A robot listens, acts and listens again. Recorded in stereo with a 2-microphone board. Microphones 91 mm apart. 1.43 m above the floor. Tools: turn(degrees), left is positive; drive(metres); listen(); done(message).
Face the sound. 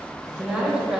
turn(degrees=-30)
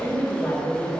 turn(degrees=20)
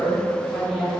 done("Found it: a woman speaking, straight ahead, 2 to 4 m away.")